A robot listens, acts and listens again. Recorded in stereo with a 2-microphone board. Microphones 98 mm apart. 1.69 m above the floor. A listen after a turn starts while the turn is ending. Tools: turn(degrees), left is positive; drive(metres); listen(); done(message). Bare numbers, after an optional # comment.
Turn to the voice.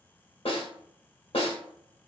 listen()
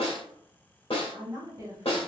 # The woman speaking: about 35° right or 145° right.
turn(-35)
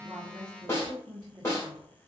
# The woman speaking: about 35° right or 145° right.
turn(-35)
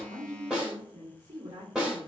# So it is at 130° right.
turn(-130)
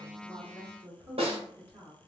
# The woman speaking is now 20° right.
turn(-20)
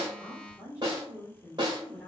done("Found it: a woman speaking, straight ahead, 1 to 2 m away.")